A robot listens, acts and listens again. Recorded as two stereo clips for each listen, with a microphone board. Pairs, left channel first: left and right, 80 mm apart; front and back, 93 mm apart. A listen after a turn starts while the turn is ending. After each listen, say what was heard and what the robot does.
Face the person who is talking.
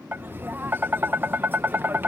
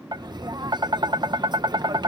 Keep listening.
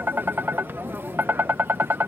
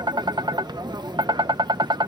Keep listening.
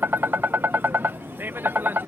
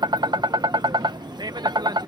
I can't make out anyone speaking, only tapping.